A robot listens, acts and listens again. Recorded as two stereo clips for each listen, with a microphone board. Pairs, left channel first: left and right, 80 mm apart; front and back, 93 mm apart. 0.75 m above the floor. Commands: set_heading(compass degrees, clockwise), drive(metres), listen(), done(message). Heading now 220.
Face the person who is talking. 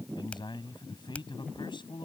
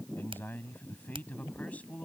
set_heading(145)
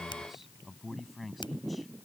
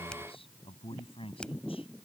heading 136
done("Facing the man speaking.")